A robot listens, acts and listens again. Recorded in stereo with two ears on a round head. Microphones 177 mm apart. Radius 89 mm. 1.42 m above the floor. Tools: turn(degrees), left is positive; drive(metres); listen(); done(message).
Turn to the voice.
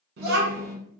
turn(degrees=-55)
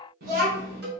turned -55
turn(degrees=-55)
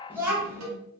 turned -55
turn(degrees=-10)
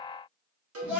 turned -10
done("Facing the child speaking.")